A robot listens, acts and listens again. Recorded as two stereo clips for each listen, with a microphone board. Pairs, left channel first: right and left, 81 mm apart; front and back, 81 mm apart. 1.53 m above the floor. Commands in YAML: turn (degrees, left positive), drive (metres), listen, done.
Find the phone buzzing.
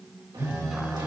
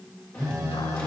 turn: 140
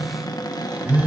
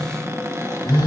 turn: 15
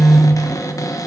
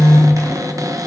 done: "Found it: a phone buzzing, straight ahead, 2 to 4 m away."